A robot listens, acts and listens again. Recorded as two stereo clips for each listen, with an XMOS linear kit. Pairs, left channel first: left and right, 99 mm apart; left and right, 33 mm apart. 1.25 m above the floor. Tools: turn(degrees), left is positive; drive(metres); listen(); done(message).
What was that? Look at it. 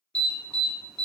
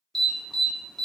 turn(degrees=30)
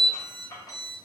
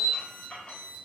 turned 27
turn(degrees=140)
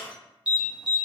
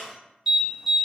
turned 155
turn(degrees=-10)
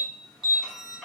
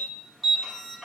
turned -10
done("Facing the alarm.")